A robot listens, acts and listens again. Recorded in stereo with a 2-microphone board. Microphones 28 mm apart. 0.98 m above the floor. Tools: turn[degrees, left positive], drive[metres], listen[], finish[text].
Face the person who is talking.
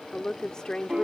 Thought: The woman speaking: about 25° left or 155° left.
Action: turn[25]
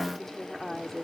Action: finish[Facing the woman speaking.]